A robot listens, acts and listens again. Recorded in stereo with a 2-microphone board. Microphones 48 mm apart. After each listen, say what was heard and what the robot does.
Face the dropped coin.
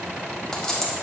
Turn 30° left.
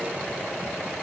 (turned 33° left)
Keep listening.
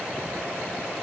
I heard a dropped coin, but can't make it out now. It was about 20° right or 135° left.